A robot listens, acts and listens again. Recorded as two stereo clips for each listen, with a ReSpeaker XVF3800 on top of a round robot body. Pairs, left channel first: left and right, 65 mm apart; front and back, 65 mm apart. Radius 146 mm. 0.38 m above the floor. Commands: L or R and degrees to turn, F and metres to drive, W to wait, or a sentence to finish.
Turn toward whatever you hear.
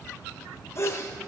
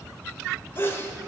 L50
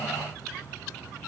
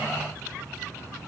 I heard a sneeze from this way, but can't make it out now.